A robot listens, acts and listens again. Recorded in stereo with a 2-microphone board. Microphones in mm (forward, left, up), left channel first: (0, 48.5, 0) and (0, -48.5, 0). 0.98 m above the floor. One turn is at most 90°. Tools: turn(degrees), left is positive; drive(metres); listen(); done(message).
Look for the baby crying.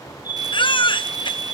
turn(degrees=55)
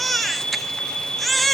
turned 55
done("Found it: a baby crying, straight ahead.")